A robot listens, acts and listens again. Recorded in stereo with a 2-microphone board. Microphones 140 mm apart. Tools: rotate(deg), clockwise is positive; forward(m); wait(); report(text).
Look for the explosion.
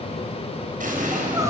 rotate(70)
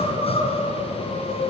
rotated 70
wait()
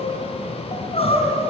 report("I heard an explosion, but can't make it out now. It was about straight ahead or 40° right.")